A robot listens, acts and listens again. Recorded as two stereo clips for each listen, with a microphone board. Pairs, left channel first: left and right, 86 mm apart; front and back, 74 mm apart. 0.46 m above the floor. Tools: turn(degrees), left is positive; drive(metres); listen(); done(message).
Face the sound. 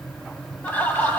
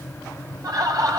turn(degrees=155)
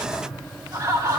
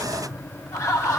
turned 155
turn(degrees=-40)
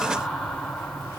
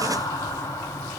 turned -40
done("Facing the laughter.")